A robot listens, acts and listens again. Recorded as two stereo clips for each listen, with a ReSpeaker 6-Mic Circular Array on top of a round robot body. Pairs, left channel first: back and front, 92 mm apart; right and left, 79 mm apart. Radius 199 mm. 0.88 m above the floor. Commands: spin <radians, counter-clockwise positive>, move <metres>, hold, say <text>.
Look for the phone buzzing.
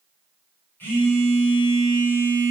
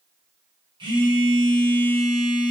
spin 1.92
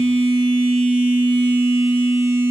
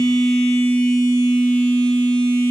spin -0.26
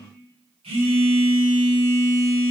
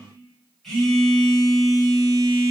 say Facing the phone buzzing.